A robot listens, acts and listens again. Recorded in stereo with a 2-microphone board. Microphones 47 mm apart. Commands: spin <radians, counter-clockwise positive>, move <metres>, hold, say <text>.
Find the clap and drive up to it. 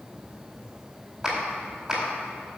spin -0.52
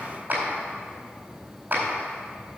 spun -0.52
spin -2.36
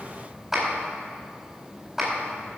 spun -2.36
spin -0.17
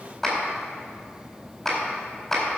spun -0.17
move 1.0
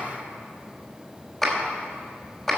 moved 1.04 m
move 1.0
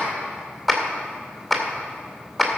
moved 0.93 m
move 1.0
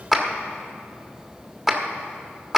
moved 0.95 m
spin -0.17
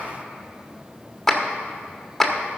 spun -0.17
move 1.0
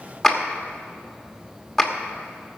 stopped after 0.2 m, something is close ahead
say Arrived at the clap, straight ahead.